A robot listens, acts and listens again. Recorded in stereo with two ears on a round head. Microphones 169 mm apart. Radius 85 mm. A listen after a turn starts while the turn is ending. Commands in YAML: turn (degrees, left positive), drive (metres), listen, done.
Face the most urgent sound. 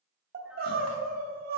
turn: -55
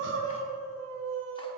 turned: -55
turn: -70
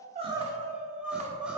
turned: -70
done: "Found it: crying, straight ahead, 1 to 2 m away."